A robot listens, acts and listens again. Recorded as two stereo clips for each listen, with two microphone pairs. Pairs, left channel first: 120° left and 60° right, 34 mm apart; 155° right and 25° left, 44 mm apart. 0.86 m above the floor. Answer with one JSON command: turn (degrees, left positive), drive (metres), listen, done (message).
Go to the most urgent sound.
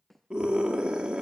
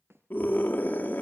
{"turn": -120}
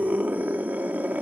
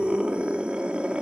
{"turn": -35}
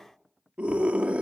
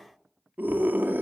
{"turn": -10}
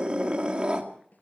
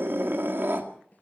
{"drive": 1.0}
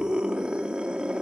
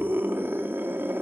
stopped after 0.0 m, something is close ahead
{"done": "Something is in my way. I am facing the scream but have not reached it."}